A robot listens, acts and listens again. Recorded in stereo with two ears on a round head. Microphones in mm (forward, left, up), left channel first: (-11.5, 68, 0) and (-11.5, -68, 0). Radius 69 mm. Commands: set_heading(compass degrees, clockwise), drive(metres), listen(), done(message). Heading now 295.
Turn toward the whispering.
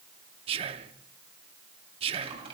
set_heading(330)
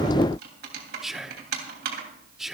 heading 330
done("Found it: whispering, straight ahead.")